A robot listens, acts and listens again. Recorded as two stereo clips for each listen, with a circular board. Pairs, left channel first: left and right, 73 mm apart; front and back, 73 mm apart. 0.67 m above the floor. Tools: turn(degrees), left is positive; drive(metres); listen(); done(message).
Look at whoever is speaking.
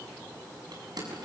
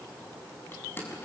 listen()
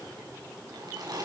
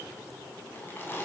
listen()
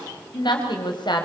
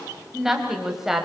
turn(degrees=95)
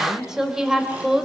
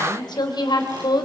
done("Facing the woman speaking.")